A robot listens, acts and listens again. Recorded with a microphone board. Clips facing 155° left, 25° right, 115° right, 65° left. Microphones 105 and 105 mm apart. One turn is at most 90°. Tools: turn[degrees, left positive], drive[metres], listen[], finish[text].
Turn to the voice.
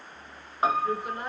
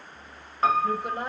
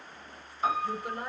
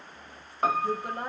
Thought: The woman speaking: 20° left.
Action: turn[20]
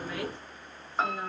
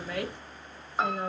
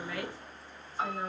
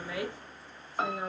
Action: finish[Facing the woman speaking.]